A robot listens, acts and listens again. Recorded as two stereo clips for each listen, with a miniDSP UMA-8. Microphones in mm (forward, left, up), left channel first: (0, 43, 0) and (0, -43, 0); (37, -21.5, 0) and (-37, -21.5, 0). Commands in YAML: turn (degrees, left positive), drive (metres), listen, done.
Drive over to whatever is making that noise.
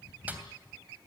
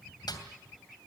listen: true
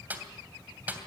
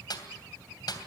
turn: -20
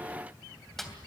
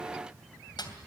drive: 1.0
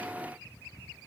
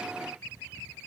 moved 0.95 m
listen: true
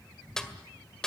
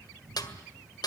turn: 10
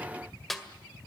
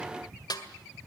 drive: 1.0
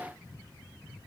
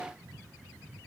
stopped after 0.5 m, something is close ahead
listen: true
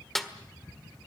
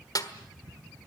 done: "Arrived at the snare drum, straight ahead."